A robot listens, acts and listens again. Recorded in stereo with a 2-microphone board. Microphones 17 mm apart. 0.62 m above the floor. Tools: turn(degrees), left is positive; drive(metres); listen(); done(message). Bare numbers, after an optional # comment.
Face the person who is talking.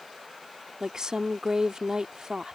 # The woman speaking: about 45° right or 135° right.
turn(-45)
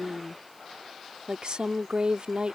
# So it is at 85° right.
turn(-85)
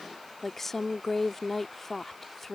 # The woman speaking is now 30° left.
turn(30)
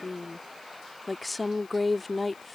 # The woman speaking is now 10° left.
turn(10)
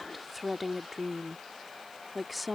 done("Facing the woman speaking.")